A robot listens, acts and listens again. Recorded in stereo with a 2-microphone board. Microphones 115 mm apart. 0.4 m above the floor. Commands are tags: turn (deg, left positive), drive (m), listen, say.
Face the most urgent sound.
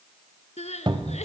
<turn deg="90"/>
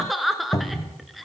<say>Facing the crying.</say>